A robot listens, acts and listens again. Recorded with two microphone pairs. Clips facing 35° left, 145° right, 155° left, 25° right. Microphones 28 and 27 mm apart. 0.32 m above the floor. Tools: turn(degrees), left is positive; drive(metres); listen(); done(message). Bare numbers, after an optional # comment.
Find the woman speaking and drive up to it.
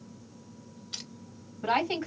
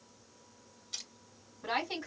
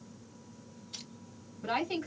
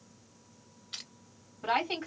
# The woman speaking: 10° left.
turn(10)
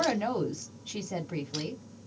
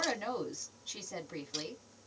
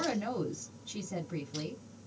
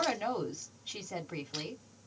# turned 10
drive(1.0)
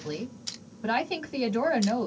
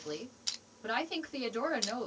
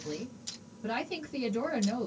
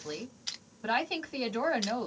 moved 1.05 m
drive(1.0)
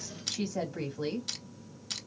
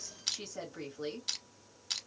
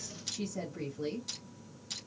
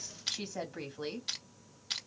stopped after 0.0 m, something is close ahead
done("Arrived at the woman speaking, straight ahead.")